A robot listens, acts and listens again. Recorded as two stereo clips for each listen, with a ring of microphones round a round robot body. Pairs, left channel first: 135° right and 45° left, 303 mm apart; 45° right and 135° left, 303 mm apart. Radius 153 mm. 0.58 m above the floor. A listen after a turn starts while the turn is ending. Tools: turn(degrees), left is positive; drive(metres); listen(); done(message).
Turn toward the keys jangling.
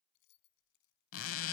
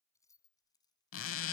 turn(degrees=-120)
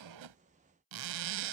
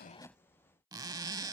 listen()
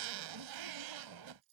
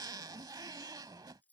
turn(degrees=40)
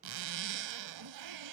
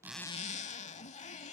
listen()
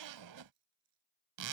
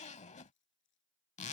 turn(degrees=10)
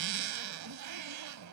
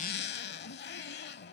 listen()
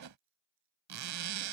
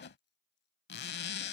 listen()
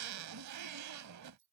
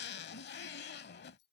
done("Facing the keys jangling.")